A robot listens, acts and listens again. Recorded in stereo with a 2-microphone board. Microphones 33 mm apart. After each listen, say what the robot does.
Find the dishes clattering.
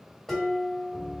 Turn 30° left.
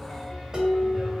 Turn 20° right.
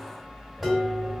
Facing the dishes clattering.